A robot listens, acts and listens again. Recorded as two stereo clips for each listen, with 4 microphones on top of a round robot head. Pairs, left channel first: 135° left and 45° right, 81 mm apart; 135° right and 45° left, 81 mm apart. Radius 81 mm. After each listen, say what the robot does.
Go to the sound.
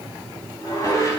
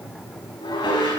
Turn 170° right.
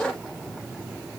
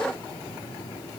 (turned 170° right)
Keep listening.
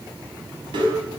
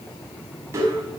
Turn 15° right.
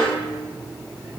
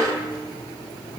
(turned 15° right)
Drive 1.0 m forward.
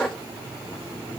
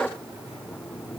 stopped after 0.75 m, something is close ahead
Keep listening.
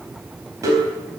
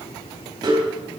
Something is in my way. I am facing the dishes clattering but have not reached it.